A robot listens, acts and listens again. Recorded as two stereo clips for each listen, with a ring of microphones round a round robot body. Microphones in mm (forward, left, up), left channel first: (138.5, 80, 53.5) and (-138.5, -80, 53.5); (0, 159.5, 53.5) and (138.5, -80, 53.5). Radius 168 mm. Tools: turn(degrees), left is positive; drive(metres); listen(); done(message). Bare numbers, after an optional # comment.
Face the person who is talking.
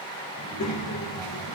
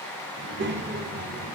done("Found it: a child speaking, straight ahead, 1 to 2 m away.")